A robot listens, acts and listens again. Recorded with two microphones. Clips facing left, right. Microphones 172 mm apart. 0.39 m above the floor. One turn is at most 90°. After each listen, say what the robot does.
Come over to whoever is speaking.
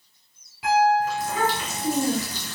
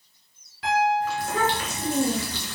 Turn 50° right.
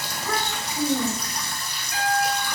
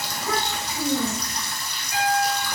Drive 1.0 m forward.
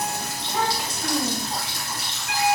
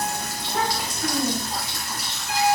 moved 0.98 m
Drive 1.0 m forward.
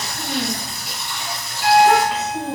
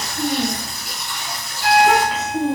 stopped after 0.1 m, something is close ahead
I am next to the child speaking.